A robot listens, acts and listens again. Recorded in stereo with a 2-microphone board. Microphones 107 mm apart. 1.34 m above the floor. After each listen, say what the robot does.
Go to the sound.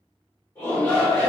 Turn 20° left.
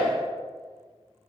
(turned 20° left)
Drive 1.0 m forward.
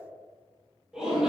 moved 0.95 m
Drive 1.0 m forward.
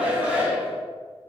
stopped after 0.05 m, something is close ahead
Turn 15° right.
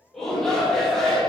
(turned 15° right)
I am next to the shout.